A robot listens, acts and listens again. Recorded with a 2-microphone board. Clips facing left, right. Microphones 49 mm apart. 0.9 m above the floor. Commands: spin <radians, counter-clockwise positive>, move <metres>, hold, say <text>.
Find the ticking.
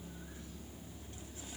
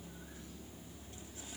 hold
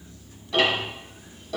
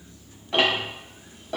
spin -0.79
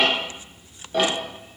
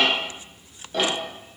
say Facing the ticking, 1 to 2 m away.